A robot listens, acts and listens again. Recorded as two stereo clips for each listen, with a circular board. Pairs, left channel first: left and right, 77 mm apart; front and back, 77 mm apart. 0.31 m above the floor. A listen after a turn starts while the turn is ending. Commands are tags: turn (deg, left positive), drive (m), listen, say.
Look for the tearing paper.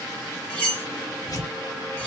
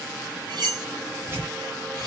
<turn deg="125"/>
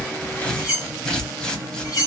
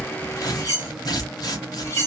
<turn deg="10"/>
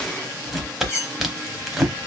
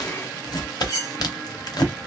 <say>Facing the tearing paper.</say>